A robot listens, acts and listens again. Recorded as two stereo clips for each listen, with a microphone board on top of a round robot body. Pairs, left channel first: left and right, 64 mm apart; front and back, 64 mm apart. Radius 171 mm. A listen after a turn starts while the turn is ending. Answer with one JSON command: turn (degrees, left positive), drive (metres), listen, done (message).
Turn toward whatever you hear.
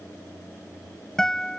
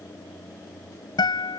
{"done": "Found it: a guitar, straight ahead."}